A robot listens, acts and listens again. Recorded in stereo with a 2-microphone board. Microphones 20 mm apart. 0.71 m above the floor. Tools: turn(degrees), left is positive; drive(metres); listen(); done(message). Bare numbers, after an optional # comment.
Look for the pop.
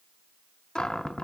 listen()
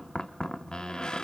listen()
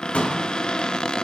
turn(90)
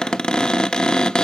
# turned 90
done("I heard a pop from this way, but can't make it out now.")